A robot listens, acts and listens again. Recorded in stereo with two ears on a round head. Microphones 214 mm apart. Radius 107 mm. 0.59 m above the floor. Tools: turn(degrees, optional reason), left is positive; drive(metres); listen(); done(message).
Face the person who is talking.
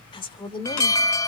turn(degrees=20, reason="The woman speaking: about 20° left or 160° left.")
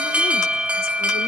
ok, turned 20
listen()
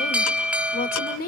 turn(degrees=135, reason="So it is at 135° left.")
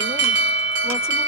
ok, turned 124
turn(degrees=10, reason="Nothing new. It was at 10° left.")
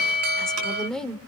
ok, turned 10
done("Facing the woman speaking, 1 to 2 m away.")